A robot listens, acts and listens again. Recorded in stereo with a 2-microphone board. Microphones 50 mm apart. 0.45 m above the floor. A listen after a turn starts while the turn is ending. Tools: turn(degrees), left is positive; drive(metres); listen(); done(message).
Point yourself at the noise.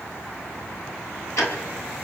turn(degrees=70)
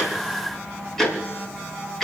done("Facing the ticking, 2 to 4 m away.")